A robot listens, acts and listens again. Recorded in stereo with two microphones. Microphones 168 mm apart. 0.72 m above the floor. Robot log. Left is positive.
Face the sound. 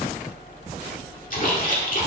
note: The splash: about 55° left or 125° left.
cmd yaw +55
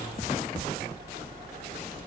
cmd idle
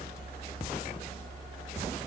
end: I heard a splash, but can't make it out now. It was about straight ahead or 70° left.